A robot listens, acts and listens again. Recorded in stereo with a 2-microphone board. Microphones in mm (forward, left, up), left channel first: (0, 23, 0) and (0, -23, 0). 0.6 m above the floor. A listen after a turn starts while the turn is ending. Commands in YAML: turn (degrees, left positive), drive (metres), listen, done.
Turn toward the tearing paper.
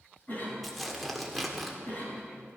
turn: -30
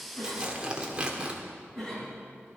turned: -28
turn: -150
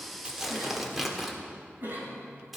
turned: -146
done: "Facing the tearing paper."